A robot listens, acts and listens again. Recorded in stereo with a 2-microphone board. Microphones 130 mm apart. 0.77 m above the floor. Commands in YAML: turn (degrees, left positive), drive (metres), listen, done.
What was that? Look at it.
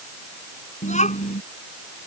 turn: 65
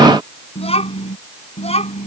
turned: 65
turn: 55
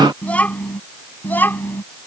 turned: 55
turn: 15
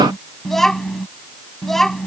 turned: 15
done: "Facing the child speaking."